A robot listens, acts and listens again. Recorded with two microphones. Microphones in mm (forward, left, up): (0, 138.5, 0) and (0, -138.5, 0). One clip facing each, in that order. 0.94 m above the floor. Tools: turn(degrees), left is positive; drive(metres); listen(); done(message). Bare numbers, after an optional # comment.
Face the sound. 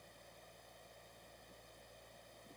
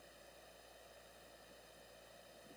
listen()
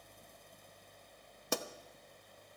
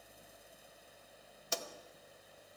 # The pop: about 60° left or 120° left.
turn(60)
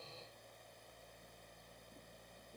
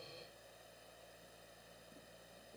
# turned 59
listen()
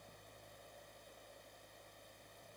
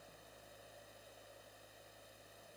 done("I heard a pop, but can't make it out now. It was about 5° left or 60° left.")